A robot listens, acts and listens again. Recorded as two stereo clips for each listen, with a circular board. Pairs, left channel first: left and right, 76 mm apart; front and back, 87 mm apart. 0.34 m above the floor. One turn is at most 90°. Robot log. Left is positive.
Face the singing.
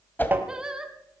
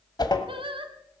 note: The singing: 170° right.
cmd yaw -90
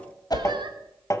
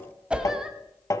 note: Nothing new. It was at 80° right.
cmd yaw -80
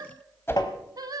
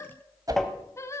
note: The singing is now 55° right.
cmd yaw -55
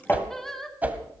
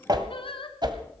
end: Found it: singing, straight ahead, 1 to 2 m away.